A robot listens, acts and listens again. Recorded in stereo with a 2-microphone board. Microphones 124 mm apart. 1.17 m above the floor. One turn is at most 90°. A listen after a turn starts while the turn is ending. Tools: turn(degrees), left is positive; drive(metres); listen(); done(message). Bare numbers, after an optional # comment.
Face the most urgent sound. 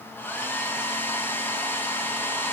listen()
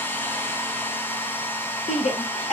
# The shout: about 70° left or 110° left.
turn(70)
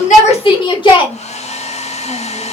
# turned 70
# So it is at 45° left.
turn(45)
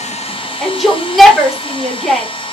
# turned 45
done("Found it: a shout, straight ahead.")